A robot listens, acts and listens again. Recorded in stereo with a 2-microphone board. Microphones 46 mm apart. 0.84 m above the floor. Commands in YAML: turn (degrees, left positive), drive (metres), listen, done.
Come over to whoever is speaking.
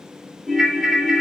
listen: true
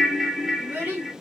turn: -50
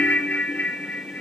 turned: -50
listen: true
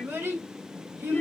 turn: -80
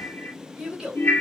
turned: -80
drive: 1.0
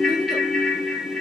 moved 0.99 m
listen: true
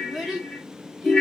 drive: 1.0
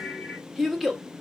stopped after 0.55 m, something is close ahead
done: "I am next to the child speaking."